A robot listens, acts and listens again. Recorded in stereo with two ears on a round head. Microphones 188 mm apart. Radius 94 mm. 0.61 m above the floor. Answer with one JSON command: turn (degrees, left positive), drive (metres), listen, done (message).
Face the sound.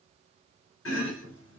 {"turn": 65}
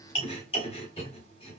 {"turn": 30}
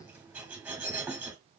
{"turn": -10}
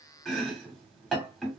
{"done": "Facing the chopping."}